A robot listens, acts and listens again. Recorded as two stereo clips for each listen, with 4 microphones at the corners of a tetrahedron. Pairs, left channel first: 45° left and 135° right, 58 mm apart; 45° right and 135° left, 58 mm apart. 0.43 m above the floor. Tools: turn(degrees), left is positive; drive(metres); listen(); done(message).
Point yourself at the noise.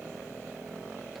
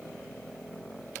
listen()
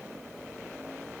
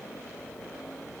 listen()
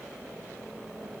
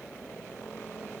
done("I can't make out anything to turn to.")